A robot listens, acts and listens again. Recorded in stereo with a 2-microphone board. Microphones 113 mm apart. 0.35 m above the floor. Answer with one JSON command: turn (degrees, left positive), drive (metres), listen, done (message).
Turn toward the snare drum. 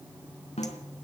{"turn": 70}
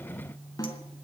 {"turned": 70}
{"turn": 35}
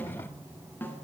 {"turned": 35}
{"turn": 20}
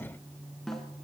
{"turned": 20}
{"done": "Facing the snare drum."}